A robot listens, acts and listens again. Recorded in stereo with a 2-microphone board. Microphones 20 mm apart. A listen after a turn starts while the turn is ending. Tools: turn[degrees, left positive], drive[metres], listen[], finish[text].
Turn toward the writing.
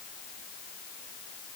Action: listen[]
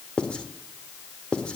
Thought: The writing: about 60° left or 120° left.
Action: turn[60]
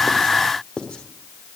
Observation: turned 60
Thought: So it is at 55° left.
Action: turn[55]
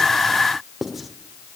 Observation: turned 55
Action: finish[Found it: writing, straight ahead.]